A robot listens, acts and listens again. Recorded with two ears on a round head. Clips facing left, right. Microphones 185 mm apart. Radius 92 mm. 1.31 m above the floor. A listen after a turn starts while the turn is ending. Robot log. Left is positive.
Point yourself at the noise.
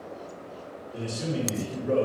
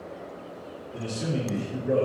cmd yaw +30
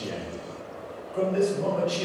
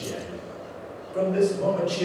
note: So it is at 35° right.
cmd yaw -35
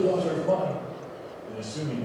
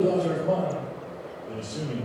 end: Found it: a man speaking, straight ahead.